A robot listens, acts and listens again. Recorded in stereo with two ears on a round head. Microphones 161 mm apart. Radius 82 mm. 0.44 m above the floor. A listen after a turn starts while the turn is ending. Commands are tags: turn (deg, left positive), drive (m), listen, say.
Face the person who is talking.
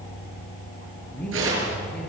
<turn deg="30"/>
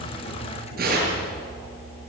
<listen/>
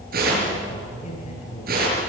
<turn deg="140"/>
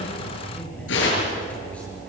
<listen/>
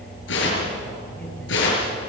<listen/>
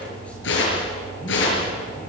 <say>Facing where the man speaking came from. I can't hear it now.</say>